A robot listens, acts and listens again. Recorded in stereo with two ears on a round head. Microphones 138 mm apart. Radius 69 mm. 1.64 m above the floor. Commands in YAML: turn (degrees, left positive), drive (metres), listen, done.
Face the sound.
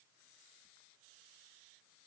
listen: true
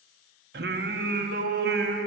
turn: -70
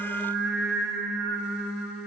done: "Found it: singing, straight ahead, 1 to 2 m away."